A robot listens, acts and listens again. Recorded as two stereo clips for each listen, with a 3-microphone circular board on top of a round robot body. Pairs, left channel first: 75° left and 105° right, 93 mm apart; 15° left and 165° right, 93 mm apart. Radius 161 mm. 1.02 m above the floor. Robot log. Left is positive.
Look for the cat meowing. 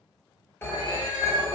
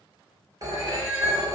note: The cat meowing: 155° right.
cmd yaw -155
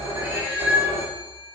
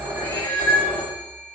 note: The cat meowing is now 50° right.
cmd yaw -50
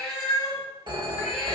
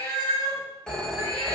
note: The cat meowing is now 30° right.
cmd yaw -30
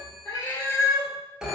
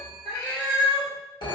note: The cat meowing is now 10° left.
cmd yaw +10
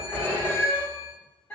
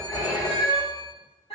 end: Found it: a cat meowing, straight ahead.